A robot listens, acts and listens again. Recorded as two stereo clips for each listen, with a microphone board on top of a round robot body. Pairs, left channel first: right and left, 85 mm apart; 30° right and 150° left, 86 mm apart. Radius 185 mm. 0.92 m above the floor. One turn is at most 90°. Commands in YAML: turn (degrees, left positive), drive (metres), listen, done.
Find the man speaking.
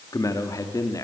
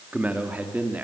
turn: -90
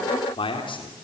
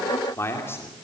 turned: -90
turn: -90
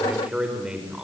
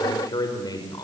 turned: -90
turn: 10
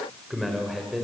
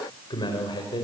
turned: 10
done: "Facing the man speaking."